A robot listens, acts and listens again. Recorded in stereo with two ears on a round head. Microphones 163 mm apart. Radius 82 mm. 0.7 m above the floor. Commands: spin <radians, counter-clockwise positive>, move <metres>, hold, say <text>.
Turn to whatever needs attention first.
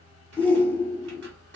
spin 0.52
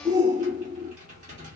spin -0.35
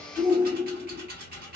spin -0.17
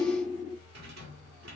say Facing the shout.